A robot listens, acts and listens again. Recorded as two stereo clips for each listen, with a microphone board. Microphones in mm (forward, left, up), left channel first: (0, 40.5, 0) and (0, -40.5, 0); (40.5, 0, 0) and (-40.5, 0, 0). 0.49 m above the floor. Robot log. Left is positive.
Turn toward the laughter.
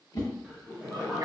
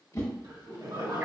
note: The laughter: straight behind.
cmd yaw +180
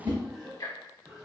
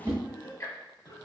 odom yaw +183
end: Found it: laughter, straight ahead, 1 to 2 m away.